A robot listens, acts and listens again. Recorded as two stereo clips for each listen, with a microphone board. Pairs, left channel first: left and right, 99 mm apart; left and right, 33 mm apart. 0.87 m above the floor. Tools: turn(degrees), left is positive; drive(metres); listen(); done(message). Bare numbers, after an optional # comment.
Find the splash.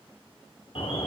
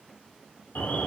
listen()
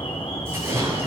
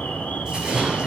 # The splash: about 25° right or 155° right.
turn(-25)
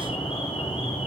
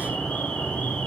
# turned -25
listen()
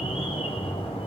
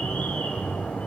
done("I heard a splash, but can't make it out now. It was about straight ahead or 130° right.")